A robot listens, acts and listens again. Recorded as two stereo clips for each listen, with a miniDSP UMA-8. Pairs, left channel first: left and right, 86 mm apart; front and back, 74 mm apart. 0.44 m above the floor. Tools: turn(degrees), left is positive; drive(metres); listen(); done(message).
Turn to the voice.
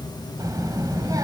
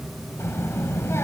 turn(degrees=-50)
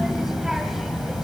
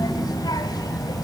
done("Found it: a child speaking, straight ahead, 1 to 2 m away.")